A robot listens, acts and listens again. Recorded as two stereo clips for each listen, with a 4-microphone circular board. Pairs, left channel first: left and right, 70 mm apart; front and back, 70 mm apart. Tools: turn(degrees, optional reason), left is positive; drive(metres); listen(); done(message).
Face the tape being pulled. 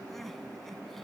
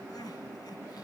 listen()
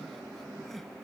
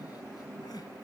listen()
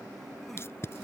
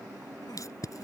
turn(degrees=40, reason="The tape being pulled: 40° left.")
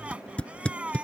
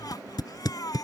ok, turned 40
turn(degrees=15, reason="The tape being pulled is now 15° left.")
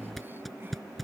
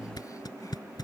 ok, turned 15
done("Found it: tape being pulled, straight ahead.")